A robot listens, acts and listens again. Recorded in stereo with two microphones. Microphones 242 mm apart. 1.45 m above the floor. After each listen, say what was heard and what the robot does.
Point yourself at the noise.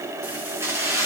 Turn 30° right.
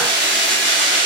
So it is at 130° right. Turn 130° right.
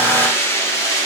The keys jangling is now 15° left. Turn 15° left.
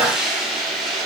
Found it: keys jangling, straight ahead, 2 to 4 m away.